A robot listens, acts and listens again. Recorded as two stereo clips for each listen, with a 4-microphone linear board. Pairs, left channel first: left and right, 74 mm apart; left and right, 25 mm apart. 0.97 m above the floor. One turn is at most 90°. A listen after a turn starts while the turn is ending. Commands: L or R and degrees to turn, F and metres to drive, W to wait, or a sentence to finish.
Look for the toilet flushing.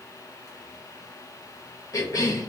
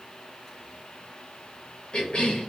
W
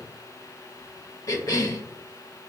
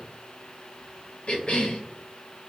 W
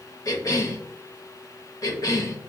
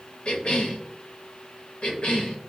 I can't make out a toilet flushing, only a cough.